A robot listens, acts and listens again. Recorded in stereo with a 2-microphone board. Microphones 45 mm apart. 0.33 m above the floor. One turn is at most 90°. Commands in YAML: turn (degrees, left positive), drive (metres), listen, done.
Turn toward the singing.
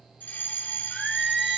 turn: -30
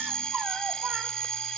listen: true
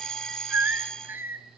turn: -90
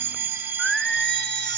turn: 10
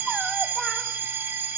listen: true
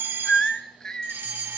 turn: 15
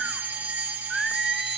done: "Found it: singing, straight ahead."